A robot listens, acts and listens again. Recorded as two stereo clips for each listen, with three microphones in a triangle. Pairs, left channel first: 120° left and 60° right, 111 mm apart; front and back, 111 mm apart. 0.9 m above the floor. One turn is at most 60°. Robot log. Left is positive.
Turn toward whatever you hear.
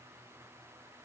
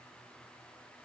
cmd idle
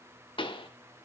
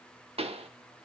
note: The pop: 155° left.
cmd yaw +60
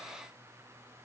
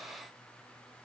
note: Nothing new. It was at 95° left.
cmd yaw +60
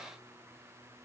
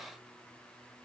note: Nothing new. It was at 35° left.
cmd yaw +35
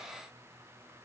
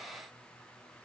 end: Facing where the pop came from. I can't hear it now.